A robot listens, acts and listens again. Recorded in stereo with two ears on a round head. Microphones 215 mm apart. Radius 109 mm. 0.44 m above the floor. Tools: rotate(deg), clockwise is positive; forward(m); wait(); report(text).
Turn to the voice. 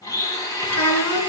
rotate(-70)
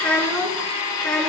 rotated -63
report("Found it: a child speaking, straight ahead, 2 to 4 m away.")